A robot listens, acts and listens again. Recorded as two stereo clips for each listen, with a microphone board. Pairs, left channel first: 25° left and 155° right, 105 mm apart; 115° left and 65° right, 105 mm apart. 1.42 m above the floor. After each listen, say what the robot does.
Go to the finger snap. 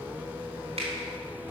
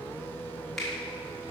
Turn 160° right.
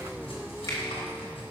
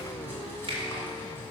Turn 35° right.
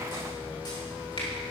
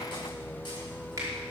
Turn 10° right.
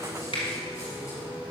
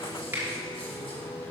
Drive 1.0 m forward.
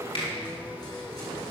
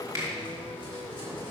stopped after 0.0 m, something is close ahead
Something is in my way. I am facing the finger snap but have not reached it.